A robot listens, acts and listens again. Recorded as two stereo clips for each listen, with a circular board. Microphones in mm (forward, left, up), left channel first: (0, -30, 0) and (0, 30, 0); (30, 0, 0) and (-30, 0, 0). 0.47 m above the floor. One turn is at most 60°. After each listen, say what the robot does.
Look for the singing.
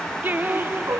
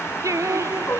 Turn 60° left.
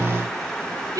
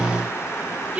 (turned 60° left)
Turn 60° left.
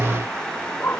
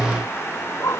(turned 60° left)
Turn 45° left.
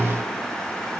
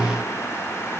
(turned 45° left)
Keep listening.
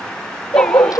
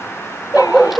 I heard singing from this way, but can't make it out now.